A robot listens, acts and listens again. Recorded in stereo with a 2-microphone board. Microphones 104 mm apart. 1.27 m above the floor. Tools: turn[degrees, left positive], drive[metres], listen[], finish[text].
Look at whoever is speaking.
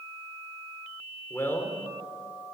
Thought: The man speaking: about 25° left or 155° left.
Action: turn[25]
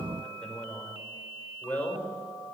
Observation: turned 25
Thought: The man speaking: about 15° left or 165° left.
Action: turn[15]
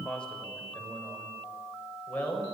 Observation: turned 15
Action: turn[30]
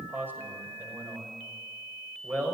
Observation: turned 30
Thought: So it is at 20° right.
Action: turn[-20]
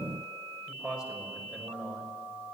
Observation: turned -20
Action: finish[Facing the man speaking, over 4 m away.]